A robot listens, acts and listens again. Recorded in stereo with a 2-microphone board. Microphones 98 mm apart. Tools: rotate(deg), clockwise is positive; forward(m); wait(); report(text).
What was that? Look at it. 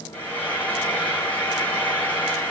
rotate(-20)
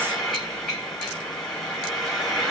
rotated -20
report("Facing the frying.")